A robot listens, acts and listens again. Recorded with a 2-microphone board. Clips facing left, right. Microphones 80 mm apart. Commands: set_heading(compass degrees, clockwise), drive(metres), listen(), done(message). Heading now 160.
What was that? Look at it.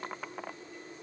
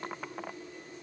listen()
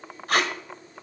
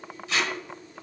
set_heading(105)
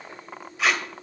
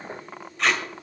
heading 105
done("Facing the tape being pulled.")